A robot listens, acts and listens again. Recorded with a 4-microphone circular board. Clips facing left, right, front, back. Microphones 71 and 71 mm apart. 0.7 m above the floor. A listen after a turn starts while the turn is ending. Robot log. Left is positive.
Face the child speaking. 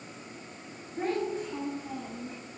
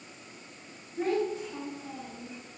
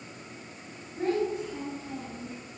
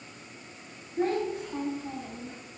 note: The child speaking: 135° left.
cmd yaw +135
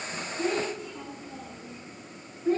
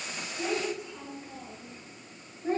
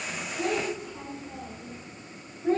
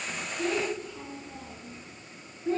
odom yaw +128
note: The child speaking is now 35° right.
cmd yaw -35
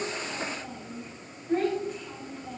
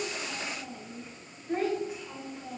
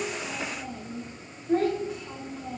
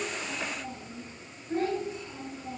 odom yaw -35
note: The child speaking is now 10° right.
cmd yaw -10
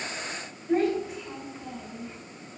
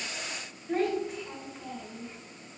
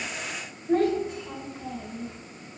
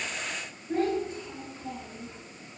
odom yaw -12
end: Facing the child speaking, 1 to 2 m away.